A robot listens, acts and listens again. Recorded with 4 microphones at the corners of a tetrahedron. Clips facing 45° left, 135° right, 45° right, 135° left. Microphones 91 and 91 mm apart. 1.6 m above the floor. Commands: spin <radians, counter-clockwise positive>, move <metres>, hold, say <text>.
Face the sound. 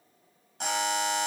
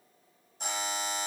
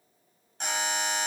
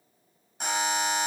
spin 0.96
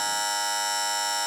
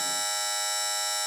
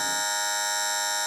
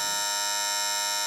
spin 0.26
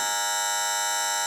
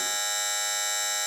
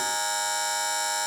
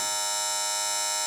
say Found it: a buzzer, straight ahead.